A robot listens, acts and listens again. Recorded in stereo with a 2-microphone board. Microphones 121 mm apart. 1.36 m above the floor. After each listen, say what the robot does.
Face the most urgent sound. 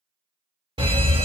Turn 50° right.
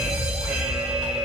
Turn 10° right.
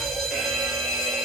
Facing the fire alarm, 1 to 2 m away.